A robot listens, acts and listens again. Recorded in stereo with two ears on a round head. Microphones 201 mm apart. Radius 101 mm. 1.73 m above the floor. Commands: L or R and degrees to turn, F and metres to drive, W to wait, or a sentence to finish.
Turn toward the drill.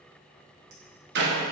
W
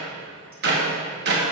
W
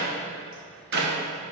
I can't make out a drill to turn to.